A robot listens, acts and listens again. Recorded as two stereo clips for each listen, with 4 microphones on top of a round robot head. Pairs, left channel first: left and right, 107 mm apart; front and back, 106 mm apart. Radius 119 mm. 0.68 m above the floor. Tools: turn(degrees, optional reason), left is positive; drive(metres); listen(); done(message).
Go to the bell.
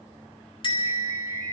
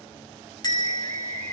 turn(degrees=50, reason="The bell: 50° left.")
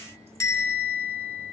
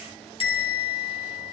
turn(degrees=30, reason="The bell is now 30° left.")
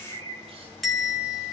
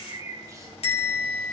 drive(metres=1.0)
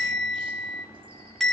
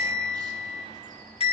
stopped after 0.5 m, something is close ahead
done("Blocked. The bell is further on, straight ahead.")